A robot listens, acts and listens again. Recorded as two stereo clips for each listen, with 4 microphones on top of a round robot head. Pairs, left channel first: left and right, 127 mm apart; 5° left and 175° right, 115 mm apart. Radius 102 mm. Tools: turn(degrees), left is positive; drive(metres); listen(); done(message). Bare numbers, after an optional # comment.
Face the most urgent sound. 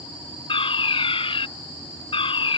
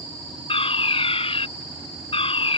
# The fire alarm: 45° left.
turn(45)
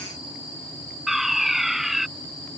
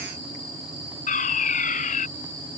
done("Found it: a fire alarm, straight ahead.")